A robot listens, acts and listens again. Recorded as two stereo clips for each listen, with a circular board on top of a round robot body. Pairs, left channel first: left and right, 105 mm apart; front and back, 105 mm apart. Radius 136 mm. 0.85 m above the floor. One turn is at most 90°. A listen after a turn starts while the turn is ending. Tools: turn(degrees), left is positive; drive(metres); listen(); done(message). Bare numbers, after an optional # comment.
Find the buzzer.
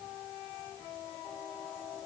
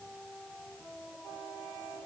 listen()
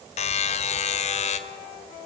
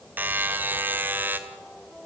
# The buzzer: 105° left.
turn(90)
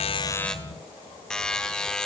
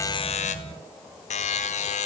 done("Facing the buzzer, 1 to 2 m away.")